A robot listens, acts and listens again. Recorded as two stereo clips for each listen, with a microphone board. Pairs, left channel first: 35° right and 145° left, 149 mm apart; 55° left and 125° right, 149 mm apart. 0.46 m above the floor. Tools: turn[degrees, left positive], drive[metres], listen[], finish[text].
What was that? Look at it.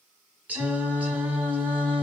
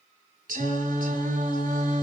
Thought: The singing: 135° right.
Action: turn[-135]
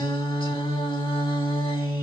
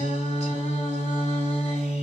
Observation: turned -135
Thought: The singing is now 15° left.
Action: turn[15]
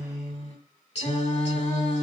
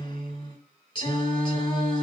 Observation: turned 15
Action: finish[Found it: singing, straight ahead, 1 to 2 m away.]